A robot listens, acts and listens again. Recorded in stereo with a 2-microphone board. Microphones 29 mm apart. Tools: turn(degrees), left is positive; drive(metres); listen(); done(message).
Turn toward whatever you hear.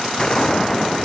turn(degrees=25)
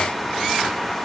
listen()
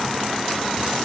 done("I heard a gunshot, but can't make it out now. It was about straight ahead or 130° left.")